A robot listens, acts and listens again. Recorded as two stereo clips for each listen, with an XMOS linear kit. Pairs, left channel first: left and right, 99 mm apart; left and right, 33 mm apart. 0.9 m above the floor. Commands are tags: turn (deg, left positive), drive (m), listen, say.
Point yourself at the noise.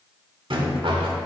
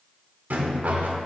<turn deg="-60"/>
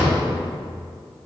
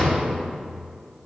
<turn deg="-10"/>
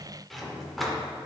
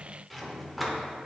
<listen/>
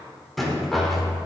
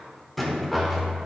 <say>Facing the rattle, 1 to 2 m away.</say>